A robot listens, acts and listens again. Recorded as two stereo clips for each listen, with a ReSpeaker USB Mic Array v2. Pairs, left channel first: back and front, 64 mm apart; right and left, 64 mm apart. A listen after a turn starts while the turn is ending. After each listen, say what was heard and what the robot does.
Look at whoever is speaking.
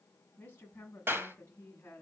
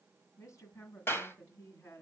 The woman speaking: 125° right. Turn 125° right.
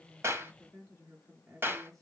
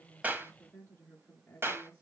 The woman speaking is now 35° right. Turn 35° right.
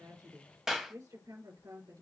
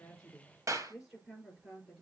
Found it: a woman speaking, straight ahead, over 4 m away.